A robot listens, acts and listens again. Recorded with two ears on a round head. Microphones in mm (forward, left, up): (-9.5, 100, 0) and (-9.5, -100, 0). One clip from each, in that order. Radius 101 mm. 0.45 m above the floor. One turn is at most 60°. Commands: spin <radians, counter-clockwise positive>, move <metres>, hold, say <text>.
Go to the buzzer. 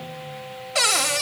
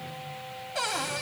hold
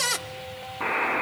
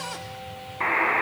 spin -1.05
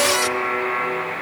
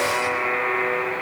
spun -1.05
move 1.0
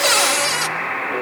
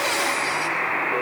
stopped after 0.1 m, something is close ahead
say Something is in my way. I am facing the buzzer but have not reached it.